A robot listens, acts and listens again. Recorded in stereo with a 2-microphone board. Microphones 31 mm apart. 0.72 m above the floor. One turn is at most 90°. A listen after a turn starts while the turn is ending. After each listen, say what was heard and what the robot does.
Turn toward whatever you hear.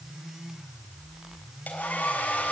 The hair dryer: about 75° left or 105° left. Turn 75° left.
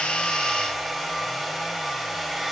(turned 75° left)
Facing the hair dryer, over 4 m away.